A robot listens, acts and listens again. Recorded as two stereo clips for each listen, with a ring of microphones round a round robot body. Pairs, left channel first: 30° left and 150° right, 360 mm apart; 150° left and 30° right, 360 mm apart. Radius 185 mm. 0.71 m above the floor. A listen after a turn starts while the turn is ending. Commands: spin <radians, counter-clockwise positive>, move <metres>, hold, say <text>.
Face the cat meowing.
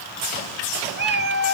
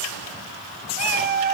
spin -1.57
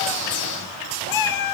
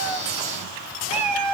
say Facing the cat meowing, 1 to 2 m away.